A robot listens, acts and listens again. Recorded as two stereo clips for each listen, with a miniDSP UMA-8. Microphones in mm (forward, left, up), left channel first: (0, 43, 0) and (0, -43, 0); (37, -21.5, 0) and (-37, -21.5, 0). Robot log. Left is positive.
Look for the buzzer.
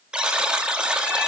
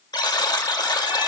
note: The buzzer: 10° right.
cmd yaw -10
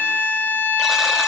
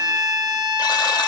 cmd idle
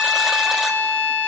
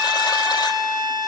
cmd idle
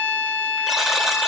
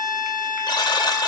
end: Facing the buzzer, 1 to 2 m away.